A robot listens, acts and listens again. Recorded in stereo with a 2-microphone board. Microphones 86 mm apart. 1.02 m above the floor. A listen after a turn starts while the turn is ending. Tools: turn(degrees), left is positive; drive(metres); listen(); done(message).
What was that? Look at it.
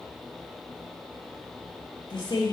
turn(degrees=55)
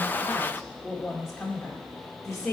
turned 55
done("Facing the woman speaking.")